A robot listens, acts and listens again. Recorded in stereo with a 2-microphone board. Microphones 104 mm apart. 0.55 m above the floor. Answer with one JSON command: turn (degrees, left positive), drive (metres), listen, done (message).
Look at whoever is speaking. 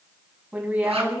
{"turn": -15}
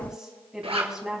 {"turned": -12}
{"done": "Found it: a woman speaking, straight ahead."}